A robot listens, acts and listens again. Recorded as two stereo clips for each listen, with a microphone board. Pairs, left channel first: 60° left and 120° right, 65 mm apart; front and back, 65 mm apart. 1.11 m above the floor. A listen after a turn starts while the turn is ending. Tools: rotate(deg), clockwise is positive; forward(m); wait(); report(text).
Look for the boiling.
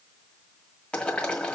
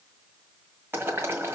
rotate(-130)
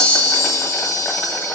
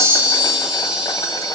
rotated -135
wait()
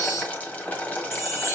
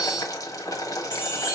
report("Facing the boiling.")